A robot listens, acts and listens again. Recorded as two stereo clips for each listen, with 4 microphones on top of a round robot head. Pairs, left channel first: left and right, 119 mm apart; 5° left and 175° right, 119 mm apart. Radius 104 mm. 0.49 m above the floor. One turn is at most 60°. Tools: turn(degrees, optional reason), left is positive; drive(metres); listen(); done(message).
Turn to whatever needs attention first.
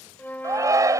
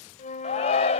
turn(degrees=-30, reason="The shout: 30° right.")
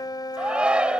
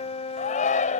turn(degrees=-10, reason="The shout is now 10° right.")
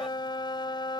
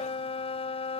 listen()
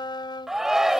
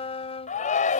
done("Facing the shout.")